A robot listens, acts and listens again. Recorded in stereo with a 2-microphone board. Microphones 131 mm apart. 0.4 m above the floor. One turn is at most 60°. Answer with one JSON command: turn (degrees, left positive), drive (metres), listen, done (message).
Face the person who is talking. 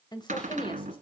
{"turn": 40}
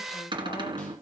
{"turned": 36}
{"listen": true}
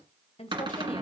{"turn": 50}
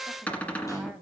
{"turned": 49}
{"done": "Found it: a woman speaking, straight ahead."}